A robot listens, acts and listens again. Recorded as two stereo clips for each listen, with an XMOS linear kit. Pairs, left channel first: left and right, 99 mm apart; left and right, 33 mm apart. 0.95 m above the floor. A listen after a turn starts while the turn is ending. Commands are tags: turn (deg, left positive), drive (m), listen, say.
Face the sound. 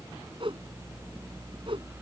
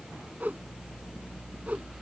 <turn deg="-60"/>
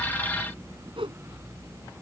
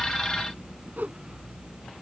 <turn deg="-65"/>
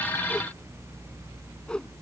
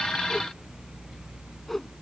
<turn deg="10"/>
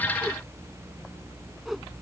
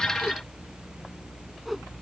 <listen/>
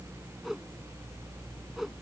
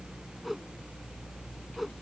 <say>Facing the whoosh.</say>